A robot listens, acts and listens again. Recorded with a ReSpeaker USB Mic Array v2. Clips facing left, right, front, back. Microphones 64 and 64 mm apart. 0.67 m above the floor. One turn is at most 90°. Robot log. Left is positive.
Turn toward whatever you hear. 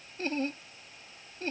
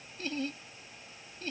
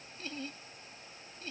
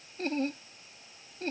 note: The laughter: 140° left.
cmd yaw +90
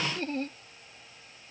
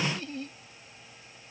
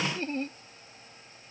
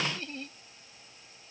note: The laughter is now 55° left.
cmd yaw +55
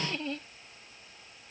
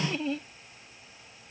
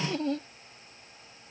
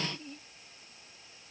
end: Found it: laughter, straight ahead.